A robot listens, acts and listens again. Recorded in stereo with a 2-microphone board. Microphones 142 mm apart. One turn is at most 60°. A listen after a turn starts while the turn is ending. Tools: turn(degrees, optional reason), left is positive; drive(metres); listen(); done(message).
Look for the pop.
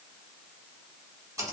listen()
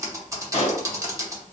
turn(degrees=50, reason="The pop: about 50° left or 130° left.")
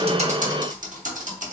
listen()
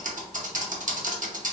done("I heard a pop, but can't make it out now. It was about straight ahead or 80° left.")